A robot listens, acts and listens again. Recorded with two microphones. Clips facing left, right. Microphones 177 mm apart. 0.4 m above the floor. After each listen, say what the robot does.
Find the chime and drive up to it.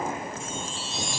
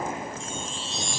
Turn 30° left.
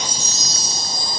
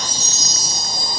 Turn 140° left.
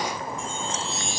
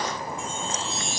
Turn 45° left.
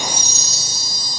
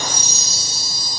Turn 20° left.
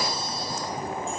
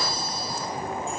Keep listening.
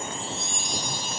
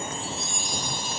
Drive 1.0 m forward.
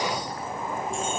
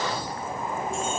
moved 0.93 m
Keep listening.
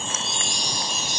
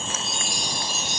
Drive 1.0 m forward.
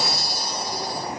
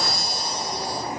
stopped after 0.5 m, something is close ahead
I am next to the chime.